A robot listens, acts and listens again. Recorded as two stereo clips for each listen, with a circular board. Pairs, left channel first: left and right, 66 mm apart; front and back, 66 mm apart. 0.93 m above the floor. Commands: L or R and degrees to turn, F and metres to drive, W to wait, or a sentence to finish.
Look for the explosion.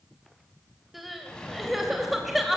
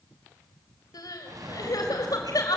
L165
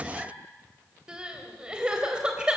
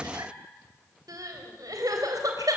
Facing where the explosion came from. I can't hear it now.